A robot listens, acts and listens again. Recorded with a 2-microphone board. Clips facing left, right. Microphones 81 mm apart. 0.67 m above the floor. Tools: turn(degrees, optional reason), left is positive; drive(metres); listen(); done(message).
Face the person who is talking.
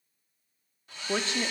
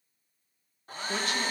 turn(degrees=25, reason="The woman speaking: about 25° left or 155° left.")
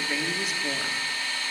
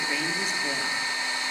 done("Facing the woman speaking, under 1 m away.")